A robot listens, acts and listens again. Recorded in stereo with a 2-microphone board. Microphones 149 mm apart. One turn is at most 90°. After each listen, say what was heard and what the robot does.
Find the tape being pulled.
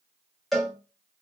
Keep listening.
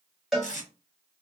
The tape being pulled: about 55° left or 125° left. Turn 55° left.
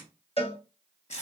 So it is at 60° left. Turn 60° left.
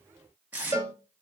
The tape being pulled is now 15° right. Turn 15° right.
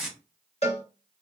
Found it: tape being pulled, straight ahead.